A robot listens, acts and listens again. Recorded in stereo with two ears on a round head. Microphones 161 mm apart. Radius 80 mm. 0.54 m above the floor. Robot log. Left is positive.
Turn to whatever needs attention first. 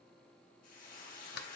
cmd idle
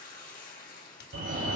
note: The fire alarm: about 60° right or 120° right.
cmd yaw -60
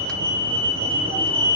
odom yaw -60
note: So it is at 35° right.
cmd yaw -35
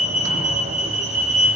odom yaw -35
note: The fire alarm is now 10° right.
cmd yaw -10
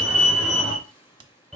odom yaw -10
end: Found it: a fire alarm, straight ahead, 2 to 4 m away.